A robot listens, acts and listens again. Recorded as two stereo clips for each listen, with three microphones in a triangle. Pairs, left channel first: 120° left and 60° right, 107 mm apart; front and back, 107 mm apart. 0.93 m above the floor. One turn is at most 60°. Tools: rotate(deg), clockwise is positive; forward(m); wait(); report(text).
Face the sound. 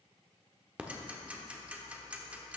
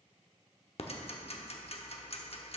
rotate(-15)
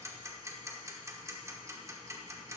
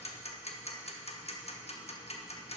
report("Facing the ticking, under 1 m away.")